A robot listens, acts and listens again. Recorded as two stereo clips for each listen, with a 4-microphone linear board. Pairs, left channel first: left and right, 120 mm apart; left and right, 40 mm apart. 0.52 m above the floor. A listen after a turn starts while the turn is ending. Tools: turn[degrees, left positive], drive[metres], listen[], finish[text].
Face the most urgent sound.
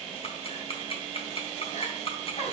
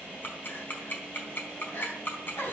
Thought: The crying: about 75° left or 105° left.
Action: turn[75]
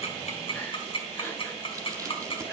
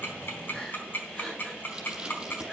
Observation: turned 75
Action: listen[]
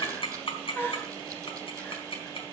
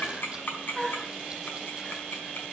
Thought: So it is at 15° left.
Action: turn[15]
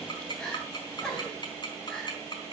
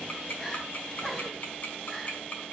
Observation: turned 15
Action: finish[Facing the crying.]